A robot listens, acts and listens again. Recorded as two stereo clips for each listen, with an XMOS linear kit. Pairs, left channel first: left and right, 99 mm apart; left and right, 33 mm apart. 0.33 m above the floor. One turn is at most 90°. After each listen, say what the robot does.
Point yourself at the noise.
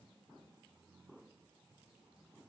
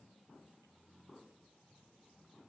Keep listening.
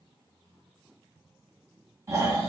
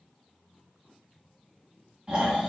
Turn 25° right.
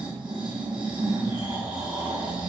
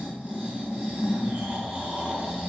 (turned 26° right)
Turn 90° right.
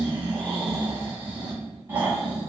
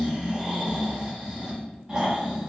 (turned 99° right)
Turn 25° right.
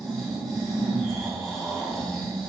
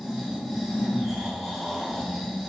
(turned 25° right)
Facing the snoring.